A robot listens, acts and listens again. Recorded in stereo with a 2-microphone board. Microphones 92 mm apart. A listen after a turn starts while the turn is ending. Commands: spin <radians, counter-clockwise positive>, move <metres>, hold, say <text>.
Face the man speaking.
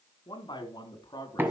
spin 0.87
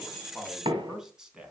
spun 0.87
spin -0.17
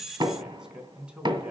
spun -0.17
spin -0.26
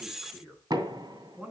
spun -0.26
spin -0.26
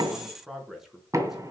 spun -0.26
say Facing the man speaking.